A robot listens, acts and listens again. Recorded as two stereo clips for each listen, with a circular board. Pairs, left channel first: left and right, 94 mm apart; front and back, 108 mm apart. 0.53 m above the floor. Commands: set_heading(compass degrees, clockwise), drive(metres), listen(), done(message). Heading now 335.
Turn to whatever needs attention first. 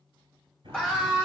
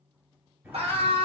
set_heading(165)
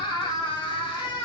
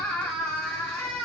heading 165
set_heading(100)
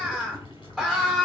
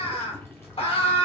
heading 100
set_heading(110)
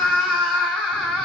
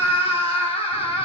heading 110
done("Found it: a scream, straight ahead.")